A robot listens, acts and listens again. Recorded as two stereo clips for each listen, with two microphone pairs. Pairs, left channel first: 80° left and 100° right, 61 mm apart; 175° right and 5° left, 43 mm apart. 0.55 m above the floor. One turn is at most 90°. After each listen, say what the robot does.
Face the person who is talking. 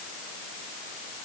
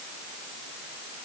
Keep listening.
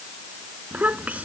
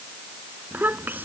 Turn 35° right.
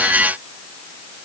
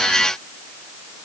Keep listening.
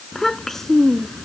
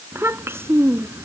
Facing the child speaking.